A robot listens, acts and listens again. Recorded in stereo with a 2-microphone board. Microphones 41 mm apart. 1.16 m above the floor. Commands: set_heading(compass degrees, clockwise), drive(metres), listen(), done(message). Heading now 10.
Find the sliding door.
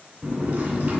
set_heading(45)
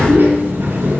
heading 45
set_heading(155)
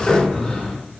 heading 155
set_heading(145)
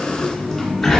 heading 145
done("Found it: a sliding door, straight ahead.")